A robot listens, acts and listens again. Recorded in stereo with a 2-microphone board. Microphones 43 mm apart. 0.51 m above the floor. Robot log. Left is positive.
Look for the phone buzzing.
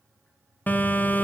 note: The phone buzzing: about 40° left or 140° left.
cmd yaw +40
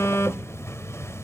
note: So it is at 100° left.
cmd yaw +100
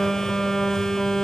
note: The phone buzzing is now 10° left.
cmd yaw +10
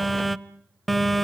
end: Facing the phone buzzing.